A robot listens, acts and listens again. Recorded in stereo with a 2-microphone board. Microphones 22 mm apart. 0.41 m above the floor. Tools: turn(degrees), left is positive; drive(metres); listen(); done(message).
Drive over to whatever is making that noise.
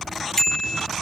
turn(degrees=25)
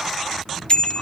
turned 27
turn(degrees=125)
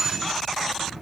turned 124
listen()
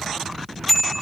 drive(metres=1.0)
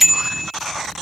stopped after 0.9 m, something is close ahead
done("I am next to the bicycle bell.")